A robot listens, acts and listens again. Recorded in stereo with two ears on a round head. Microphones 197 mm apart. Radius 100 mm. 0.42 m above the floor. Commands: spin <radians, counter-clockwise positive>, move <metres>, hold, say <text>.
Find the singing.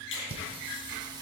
spin -0.35
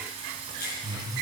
spin -0.35
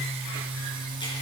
spin -0.35
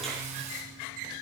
spin -0.61
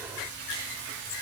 spin -2.18
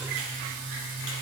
spin -0.70
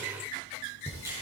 spin 0.17
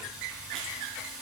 say Found it: singing, straight ahead, 2 to 4 m away.